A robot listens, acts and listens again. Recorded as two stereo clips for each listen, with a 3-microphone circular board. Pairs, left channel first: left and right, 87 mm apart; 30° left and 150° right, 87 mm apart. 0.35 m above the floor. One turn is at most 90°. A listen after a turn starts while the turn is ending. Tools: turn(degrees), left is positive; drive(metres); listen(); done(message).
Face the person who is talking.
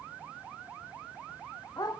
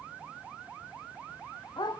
listen()
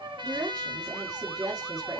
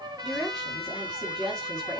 turn(degrees=-50)
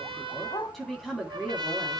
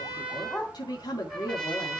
done("Found it: a woman speaking, straight ahead, 2 to 4 m away.")